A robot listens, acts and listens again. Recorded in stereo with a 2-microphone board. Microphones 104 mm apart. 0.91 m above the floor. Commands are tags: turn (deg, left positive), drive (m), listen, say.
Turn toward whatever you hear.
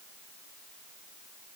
<listen/>
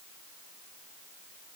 <listen/>
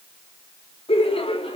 <turn deg="70"/>
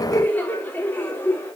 <turn deg="20"/>
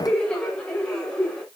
<turn deg="10"/>
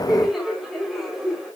<say>Found it: laughter, straight ahead, 2 to 4 m away.</say>